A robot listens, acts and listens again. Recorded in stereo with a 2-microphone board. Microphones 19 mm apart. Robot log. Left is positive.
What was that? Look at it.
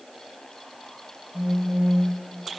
note: The phone buzzing: about 20° right or 160° right.
cmd yaw -20
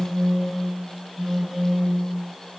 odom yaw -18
note: So it is at 145° right.
cmd yaw -145
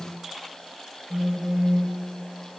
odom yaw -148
note: The phone buzzing is now 15° left.
cmd yaw +15
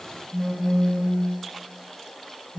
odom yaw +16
end: Facing the phone buzzing, 1 to 2 m away.